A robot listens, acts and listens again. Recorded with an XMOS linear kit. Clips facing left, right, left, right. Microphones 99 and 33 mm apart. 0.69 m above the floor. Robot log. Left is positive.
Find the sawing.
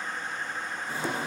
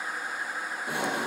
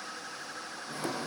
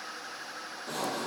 note: The sawing: about 75° right or 105° right.
cmd yaw -75
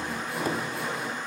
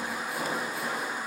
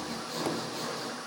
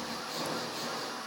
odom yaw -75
end: Found it: sawing, straight ahead.